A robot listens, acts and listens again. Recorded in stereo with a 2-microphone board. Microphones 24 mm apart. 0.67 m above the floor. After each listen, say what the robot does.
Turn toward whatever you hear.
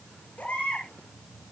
Turn 90° left.
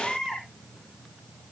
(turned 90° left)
Facing the baby crying.